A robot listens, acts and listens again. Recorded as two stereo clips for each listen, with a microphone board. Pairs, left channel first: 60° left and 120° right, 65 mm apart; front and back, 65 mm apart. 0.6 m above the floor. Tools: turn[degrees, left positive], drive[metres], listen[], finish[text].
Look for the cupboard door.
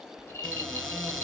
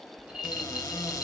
Thought: The cupboard door: 30° right.
Action: turn[-30]
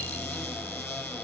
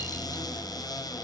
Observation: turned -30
Action: finish[Facing the cupboard door, 2 to 4 m away.]